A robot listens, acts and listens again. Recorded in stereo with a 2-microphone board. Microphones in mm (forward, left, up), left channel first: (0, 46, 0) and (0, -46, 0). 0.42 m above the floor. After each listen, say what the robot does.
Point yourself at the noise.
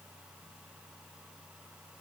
Keep listening.
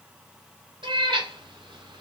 Turn 60° right.
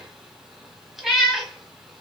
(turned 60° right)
Found it: a cat meowing, straight ahead, 1 to 2 m away.